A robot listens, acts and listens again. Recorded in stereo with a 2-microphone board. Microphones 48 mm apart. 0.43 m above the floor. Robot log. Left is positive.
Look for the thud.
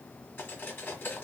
cmd idle
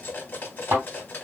note: The thud: about 45° right or 135° right.
cmd yaw -45
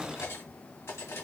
cmd idle
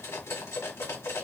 end: I heard a thud, but can't make it out now. It was about straight ahead or 90° right.